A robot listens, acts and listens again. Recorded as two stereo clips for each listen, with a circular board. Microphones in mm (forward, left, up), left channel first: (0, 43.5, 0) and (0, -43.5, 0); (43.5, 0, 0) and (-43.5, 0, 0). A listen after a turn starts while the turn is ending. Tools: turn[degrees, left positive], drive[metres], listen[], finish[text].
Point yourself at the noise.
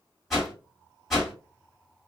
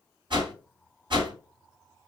Thought: The whoosh: straight behind.
Action: turn[180]
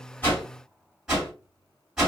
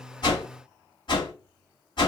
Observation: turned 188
Thought: The whoosh is now 10° right.
Action: turn[-10]
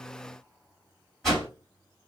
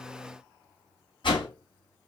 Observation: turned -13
Action: finish[Facing the whoosh.]